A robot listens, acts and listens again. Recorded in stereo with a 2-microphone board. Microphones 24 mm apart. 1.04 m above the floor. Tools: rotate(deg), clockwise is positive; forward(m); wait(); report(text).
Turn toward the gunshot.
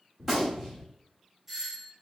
rotate(30)
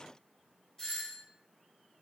wait()
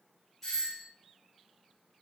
report("I heard a gunshot, but can't make it out now. It was about 15° left or 135° right.")